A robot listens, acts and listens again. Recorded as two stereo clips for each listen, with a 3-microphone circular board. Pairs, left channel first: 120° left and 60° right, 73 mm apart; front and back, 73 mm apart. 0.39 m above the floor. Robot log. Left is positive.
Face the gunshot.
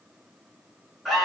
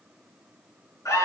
cmd idle
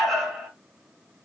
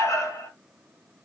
cmd idle
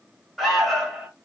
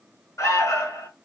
end: I can't make out a gunshot, only an alarm.